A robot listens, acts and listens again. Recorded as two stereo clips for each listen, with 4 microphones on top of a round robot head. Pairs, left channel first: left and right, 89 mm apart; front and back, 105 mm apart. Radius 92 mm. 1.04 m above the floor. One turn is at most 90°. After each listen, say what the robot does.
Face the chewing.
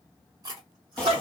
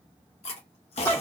Turn 35° right.
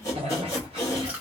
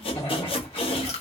Turn 15° right.
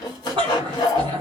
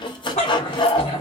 Keep listening.
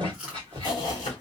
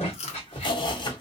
Facing the chewing, under 1 m away.